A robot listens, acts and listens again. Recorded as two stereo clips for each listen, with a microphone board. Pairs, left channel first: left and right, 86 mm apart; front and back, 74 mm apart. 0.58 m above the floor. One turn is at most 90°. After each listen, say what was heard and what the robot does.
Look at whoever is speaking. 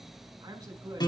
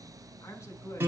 The woman speaking: 50° right. Turn 50° right.
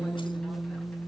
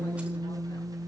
Keep listening.
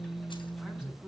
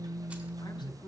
Keep listening.
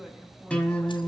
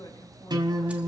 Facing where the woman speaking came from. I can't hear it now.